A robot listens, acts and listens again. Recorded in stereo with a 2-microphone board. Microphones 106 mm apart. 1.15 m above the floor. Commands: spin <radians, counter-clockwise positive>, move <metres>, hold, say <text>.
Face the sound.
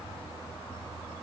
hold
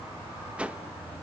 spin -0.52
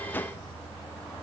spin 0.35
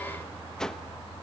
say Facing the whoosh, 1 to 2 m away.